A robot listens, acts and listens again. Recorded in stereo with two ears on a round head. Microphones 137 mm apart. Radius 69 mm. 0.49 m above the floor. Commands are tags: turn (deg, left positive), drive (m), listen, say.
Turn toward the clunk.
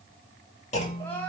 <turn deg="45"/>
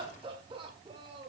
<listen/>
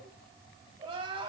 <say>I heard a clunk, but can't make it out now. It was about straight ahead or 90° left.</say>